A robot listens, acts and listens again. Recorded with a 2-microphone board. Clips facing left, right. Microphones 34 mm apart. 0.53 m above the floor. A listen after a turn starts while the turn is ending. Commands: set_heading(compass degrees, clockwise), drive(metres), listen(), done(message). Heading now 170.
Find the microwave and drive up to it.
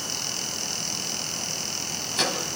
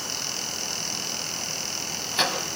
set_heading(185)
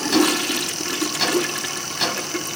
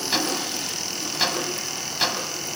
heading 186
drive(1.0)
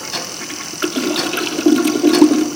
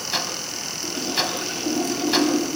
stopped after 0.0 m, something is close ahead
done("Something is in my way. I am facing the microwave but have not reached it.")